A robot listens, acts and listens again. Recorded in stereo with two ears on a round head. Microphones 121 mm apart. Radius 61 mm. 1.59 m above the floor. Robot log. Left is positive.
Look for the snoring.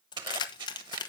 cmd idle
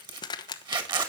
cmd idle
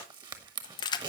end: I can't make out snoring, only a zipper and keys jangling.